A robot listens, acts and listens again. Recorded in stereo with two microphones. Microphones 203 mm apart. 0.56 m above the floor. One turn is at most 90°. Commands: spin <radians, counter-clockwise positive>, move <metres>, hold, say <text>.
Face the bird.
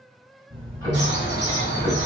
spin 0.96
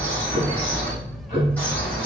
spin 0.17
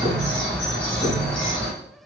say Facing the bird.